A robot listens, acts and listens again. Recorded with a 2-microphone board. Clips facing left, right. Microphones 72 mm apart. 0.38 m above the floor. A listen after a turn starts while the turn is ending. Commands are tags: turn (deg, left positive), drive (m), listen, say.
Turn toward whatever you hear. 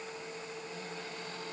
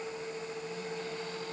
<listen/>
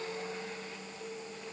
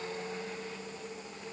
<listen/>
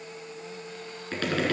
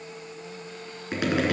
<turn deg="-15"/>
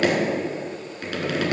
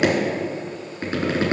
<turn deg="-150"/>
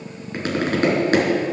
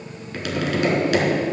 <turn deg="40"/>
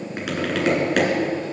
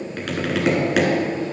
<say>Facing the tapping, 2 to 4 m away.</say>